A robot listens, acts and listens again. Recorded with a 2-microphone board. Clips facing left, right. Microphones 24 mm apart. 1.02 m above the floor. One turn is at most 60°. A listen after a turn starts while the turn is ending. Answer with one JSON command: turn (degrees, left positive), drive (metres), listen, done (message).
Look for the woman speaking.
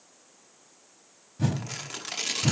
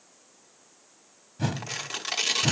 {"listen": true}
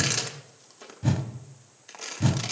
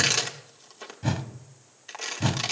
{"listen": true}
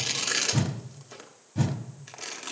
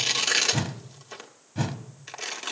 {"done": "I can't make out a woman speaking, only a whoosh and tearing paper."}